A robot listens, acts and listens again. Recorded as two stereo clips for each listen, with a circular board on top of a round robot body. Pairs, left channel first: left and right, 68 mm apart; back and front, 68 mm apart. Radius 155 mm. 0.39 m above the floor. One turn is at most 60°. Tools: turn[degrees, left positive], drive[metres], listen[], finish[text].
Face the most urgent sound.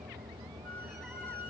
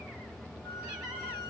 Action: listen[]
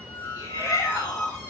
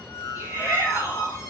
Thought: The shout: 60° left.
Action: turn[60]
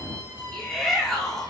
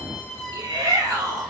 Action: finish[Found it: a shout, straight ahead, over 4 m away.]